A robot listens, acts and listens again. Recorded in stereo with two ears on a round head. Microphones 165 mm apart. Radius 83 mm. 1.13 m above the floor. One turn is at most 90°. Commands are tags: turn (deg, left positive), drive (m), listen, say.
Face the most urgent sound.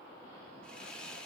<listen/>
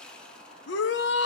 <turn deg="70"/>
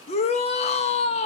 <turn deg="35"/>
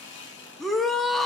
<say>Facing the shout, 1 to 2 m away.</say>